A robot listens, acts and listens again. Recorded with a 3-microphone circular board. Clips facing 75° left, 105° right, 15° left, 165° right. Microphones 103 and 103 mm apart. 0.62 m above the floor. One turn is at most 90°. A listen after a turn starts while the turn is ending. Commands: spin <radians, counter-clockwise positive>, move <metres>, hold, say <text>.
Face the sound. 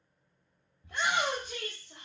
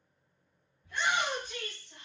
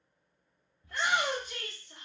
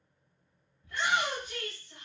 spin 1.22
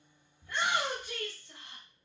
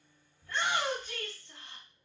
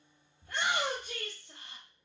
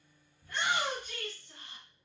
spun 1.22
say Facing the shout, 1 to 2 m away.